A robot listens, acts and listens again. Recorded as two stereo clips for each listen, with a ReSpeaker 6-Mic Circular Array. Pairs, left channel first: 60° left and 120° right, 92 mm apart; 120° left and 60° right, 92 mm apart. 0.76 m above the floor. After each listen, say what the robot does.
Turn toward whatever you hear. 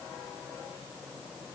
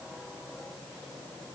Keep listening.
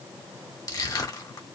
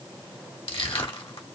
Turn 110° left.
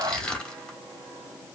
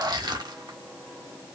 Turn 20° right.
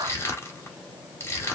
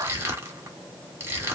Facing the crushing.